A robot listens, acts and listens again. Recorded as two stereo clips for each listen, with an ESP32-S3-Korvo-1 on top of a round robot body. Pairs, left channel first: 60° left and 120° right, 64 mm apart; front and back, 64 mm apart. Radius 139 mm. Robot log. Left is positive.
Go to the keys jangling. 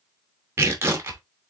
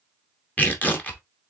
cmd idle
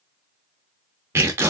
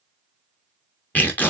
cmd idle
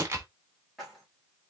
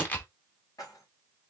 note: The keys jangling: 35° right.
cmd yaw -35
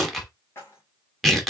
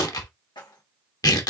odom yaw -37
cmd fwd 1.0
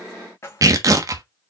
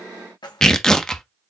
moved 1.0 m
cmd fwd 1.0
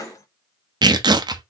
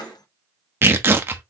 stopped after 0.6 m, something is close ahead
note: The keys jangling is now 20° left.
cmd yaw +20
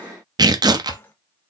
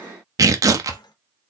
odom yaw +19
end: I am next to the keys jangling.